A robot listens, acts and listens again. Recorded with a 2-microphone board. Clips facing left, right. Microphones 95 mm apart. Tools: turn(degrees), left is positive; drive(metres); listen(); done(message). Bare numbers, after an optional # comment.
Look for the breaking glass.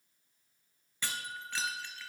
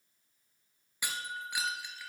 turn(-30)
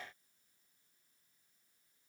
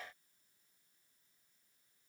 listen()
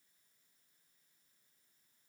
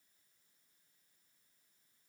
done("I heard breaking glass, but can't make it out now. It was about 15° left or 135° right.")